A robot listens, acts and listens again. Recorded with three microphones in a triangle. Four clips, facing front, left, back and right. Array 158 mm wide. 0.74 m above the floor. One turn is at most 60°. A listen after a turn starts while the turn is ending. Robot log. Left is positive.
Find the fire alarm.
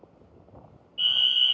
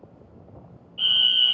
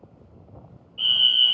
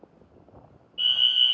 note: The fire alarm: 90° left.
cmd yaw +60
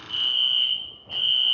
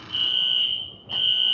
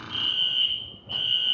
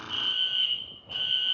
note: The fire alarm is now 45° left.
cmd yaw +45
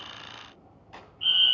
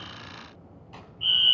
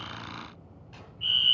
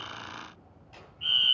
note: The fire alarm is now 20° right.
cmd yaw -20
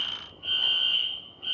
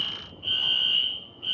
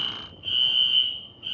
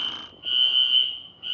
end: Found it: a fire alarm, straight ahead.